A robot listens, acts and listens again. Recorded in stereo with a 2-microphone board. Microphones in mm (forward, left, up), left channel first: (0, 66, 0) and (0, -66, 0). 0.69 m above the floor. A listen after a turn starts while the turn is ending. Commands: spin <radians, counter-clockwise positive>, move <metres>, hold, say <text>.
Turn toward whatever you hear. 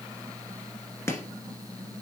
spin 0.35
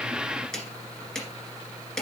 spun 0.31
say Facing the chopping, 1 to 2 m away.